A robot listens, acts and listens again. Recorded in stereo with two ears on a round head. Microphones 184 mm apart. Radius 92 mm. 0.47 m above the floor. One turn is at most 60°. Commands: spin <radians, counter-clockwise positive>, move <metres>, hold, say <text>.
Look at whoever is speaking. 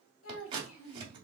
spin 1.05
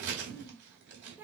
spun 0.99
spin -0.17
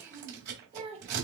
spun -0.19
spin -0.52
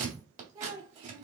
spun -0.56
spin -0.44
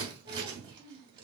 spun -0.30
spin -0.35
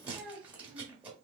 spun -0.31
say Found it: a child speaking, straight ahead.